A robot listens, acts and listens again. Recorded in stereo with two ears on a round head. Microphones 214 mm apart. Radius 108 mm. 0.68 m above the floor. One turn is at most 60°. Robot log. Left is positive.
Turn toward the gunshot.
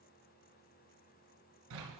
cmd idle
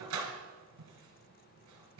cmd idle
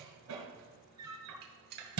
note: The gunshot: about 45° right or 135° right.
cmd yaw -45
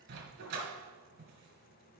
cmd idle
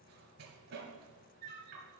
end: I heard a gunshot, but can't make it out now. It was about straight ahead or 90° right.